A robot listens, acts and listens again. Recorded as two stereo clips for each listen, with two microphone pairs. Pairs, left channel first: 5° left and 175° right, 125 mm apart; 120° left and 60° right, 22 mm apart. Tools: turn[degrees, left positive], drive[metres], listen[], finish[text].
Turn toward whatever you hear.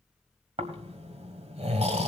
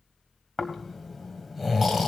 Thought: The snoring: 150° right.
Action: turn[-150]
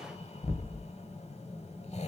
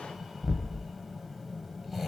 Thought: The snoring is now 25° left.
Action: turn[25]
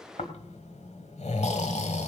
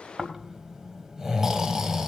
Action: finish[Found it: snoring, straight ahead, 1 to 2 m away.]